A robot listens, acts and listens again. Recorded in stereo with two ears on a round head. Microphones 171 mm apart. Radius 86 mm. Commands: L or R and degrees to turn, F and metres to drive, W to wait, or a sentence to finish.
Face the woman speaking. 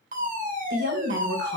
R65
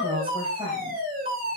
R30
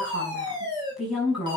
Facing the woman speaking.